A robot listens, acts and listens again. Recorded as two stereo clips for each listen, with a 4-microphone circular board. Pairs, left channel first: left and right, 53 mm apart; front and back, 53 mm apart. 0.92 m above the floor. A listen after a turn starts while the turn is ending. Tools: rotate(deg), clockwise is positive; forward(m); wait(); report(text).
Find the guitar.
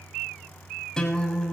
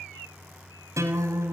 rotate(-170)
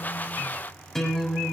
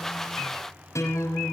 rotate(-10)
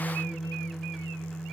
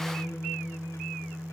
report("Found it: a guitar, straight ahead.")